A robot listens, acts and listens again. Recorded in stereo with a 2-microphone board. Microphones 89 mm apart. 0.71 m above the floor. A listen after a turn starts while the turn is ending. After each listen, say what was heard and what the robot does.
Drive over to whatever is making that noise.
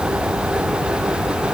Keep listening.
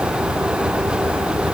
Keep listening.
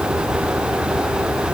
I can't make out anything.